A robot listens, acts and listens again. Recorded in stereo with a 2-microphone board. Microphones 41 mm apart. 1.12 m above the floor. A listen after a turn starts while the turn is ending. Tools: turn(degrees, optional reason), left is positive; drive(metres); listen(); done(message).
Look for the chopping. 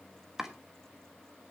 turn(degrees=-30)
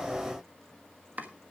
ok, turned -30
turn(degrees=-135, reason="So it is at 135° right.")
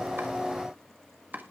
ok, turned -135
turn(degrees=-45, reason="The chopping is now 45° right.")
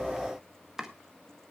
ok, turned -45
turn(degrees=-10, reason="The chopping is now 10° right.")
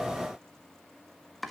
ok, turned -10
done("Facing the chopping, 1 to 2 m away.")